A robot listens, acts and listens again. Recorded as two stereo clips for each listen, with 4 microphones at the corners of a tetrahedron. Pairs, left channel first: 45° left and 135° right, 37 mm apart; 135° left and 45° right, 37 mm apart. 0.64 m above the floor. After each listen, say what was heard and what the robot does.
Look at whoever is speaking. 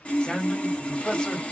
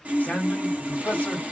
The man speaking: 115° left. Turn 115° left.
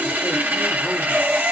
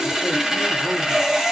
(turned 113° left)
Keep listening.
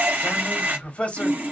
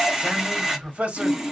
Found it: a man speaking, straight ahead.